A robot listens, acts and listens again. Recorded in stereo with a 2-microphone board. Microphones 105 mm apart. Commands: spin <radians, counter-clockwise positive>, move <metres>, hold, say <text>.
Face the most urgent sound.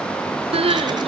spin -1.13
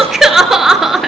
say Found it: crying, straight ahead.